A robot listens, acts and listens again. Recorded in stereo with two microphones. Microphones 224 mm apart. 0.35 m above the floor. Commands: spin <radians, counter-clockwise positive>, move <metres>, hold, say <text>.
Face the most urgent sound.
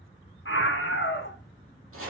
spin 1.13
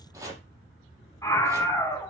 spin 0.26
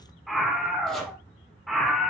say Found it: a scream, straight ahead.